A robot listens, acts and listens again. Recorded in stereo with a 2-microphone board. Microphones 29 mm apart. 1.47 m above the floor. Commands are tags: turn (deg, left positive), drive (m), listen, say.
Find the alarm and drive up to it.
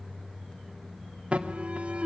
<turn deg="-45"/>
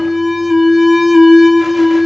<drive m="1.0"/>
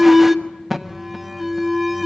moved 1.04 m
<drive m="1.0"/>
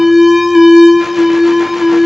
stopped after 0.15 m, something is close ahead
<turn deg="-10"/>
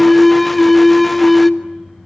<say>Arrived at the alarm, straight ahead.</say>